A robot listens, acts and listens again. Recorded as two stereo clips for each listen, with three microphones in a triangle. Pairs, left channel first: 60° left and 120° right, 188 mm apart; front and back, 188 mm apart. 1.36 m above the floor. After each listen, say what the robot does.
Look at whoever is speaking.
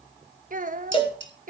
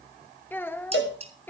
Turn 80° right.
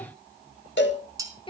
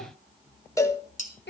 Facing the child speaking.